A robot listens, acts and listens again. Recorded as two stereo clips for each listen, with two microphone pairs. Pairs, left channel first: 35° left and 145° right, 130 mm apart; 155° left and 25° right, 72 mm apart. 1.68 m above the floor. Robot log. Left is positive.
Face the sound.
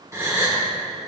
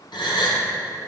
note: The gasp: 145° left.
cmd yaw +145
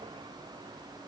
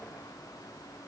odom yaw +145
end: I heard a gasp from this way, but can't make it out now.